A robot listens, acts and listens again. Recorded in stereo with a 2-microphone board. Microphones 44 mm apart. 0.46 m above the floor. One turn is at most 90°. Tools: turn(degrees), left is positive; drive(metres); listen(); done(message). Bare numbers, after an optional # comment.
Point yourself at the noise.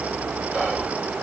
# The whispering: about 25° right or 155° right.
turn(-25)
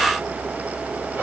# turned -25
# So it is at 125° right.
turn(-90)
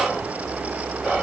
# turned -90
# The whispering is now 45° right.
turn(-45)
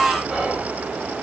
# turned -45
done("Found it: whispering, straight ahead, 1 to 2 m away.")